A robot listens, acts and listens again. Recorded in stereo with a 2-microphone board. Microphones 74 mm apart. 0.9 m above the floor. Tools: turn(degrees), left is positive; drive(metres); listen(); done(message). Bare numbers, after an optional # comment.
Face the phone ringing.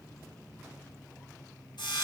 listen()
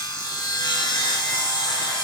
listen()
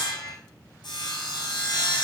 done("I can't make out a phone ringing to turn to.")